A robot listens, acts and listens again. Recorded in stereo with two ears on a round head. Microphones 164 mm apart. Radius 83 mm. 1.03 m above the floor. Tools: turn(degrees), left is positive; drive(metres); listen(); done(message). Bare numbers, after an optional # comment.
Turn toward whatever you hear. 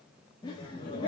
# The laughter: about 25° left or 155° left.
turn(25)
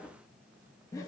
# The laughter: about 20° left or 160° left.
turn(20)
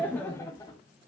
# The laughter: about 20° left or 160° left.
turn(20)
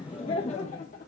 # The laughter: about 45° left or 135° left.
turn(45)
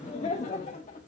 # So it is at 35° left.
turn(35)
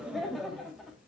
done("Found it: laughter, straight ahead.")